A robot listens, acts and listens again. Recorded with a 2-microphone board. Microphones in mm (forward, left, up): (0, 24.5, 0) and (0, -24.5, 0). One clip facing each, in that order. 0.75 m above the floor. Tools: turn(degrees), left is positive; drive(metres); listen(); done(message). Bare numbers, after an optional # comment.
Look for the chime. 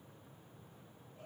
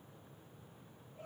listen()
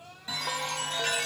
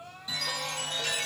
# The chime: about 30° left or 150° left.
turn(30)
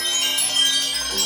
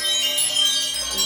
# So it is at 120° left.
turn(120)
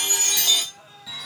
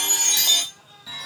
done("Facing the chime.")